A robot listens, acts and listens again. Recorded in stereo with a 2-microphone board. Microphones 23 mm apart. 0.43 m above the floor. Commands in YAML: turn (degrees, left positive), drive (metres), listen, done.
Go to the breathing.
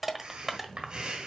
turn: -45
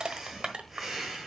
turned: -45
turn: -15
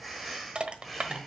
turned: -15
drive: 1.0
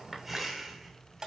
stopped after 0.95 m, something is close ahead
turn: -15
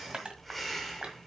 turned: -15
done: "I am next to the breathing."